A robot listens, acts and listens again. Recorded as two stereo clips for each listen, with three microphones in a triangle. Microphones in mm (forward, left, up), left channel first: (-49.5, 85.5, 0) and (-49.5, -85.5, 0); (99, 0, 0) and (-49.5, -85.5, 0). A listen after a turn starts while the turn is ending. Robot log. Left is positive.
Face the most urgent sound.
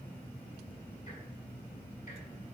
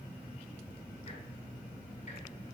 cmd idle
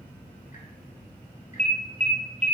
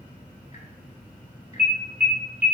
note: The alarm: 140° right.
cmd yaw -140
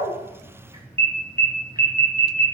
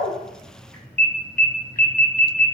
note: The alarm is now 15° left.
cmd yaw +15
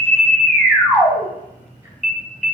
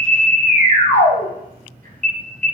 end: Found it: an alarm, straight ahead, 2 to 4 m away.